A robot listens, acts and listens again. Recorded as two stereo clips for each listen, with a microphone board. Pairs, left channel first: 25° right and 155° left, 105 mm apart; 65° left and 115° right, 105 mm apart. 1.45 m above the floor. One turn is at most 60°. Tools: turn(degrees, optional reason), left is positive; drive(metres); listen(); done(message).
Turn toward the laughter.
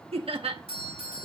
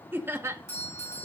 turn(degrees=-60, reason="The laughter: 175° right.")
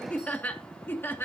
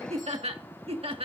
turn(degrees=-60, reason="The laughter is now 90° right.")
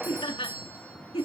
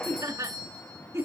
turn(degrees=-50, reason="The laughter is now 50° right.")
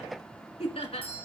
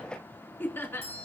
done("Facing the laughter, 2 to 4 m away.")